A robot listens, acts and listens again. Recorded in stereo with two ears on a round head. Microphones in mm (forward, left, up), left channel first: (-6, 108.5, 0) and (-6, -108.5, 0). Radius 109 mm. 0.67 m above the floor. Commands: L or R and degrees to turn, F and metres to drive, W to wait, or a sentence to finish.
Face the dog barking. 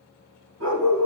R70
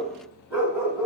R10
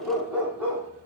R10
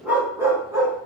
R15
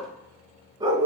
R20
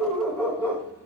Found it: a dog barking, straight ahead, 1 to 2 m away.